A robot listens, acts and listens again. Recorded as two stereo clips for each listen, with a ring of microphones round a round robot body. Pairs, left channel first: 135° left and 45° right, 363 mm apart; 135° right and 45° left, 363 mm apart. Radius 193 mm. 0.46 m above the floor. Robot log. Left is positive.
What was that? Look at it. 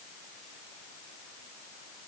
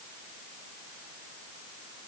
cmd idle
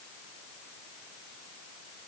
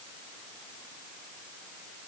cmd idle
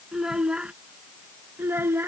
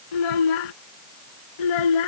note: The child speaking: 130° right.
cmd yaw -130
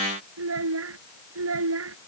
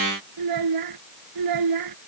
note: The child speaking is now 10° left.
cmd yaw +10
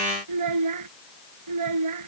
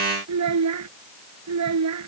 end: Found it: a child speaking, straight ahead.